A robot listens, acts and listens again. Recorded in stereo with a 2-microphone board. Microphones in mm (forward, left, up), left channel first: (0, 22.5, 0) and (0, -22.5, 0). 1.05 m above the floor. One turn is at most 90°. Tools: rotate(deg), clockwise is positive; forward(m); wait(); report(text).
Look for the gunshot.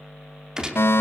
rotate(15)
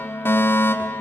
wait()
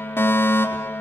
report("I heard a gunshot, but can't make it out now. It was about straight ahead or 150° right.")